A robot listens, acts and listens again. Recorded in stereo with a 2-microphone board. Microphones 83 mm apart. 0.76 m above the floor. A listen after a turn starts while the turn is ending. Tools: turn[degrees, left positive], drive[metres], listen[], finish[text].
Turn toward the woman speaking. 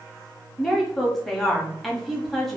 Action: turn[30]
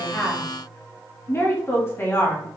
Thought: So it is at 145° left.
Action: turn[145]
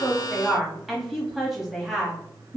Action: finish[Found it: a woman speaking, straight ahead.]